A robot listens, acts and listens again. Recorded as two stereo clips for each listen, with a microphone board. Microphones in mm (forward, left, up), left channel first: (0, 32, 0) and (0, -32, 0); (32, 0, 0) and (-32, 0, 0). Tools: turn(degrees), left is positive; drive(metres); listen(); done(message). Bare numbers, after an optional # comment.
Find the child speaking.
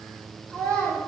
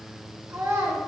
# The child speaking: 145° left.
turn(145)
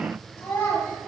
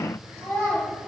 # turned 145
# The child speaking is now 55° left.
turn(55)
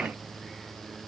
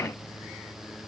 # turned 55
listen()
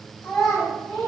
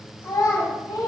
done("Facing the child speaking, over 4 m away.")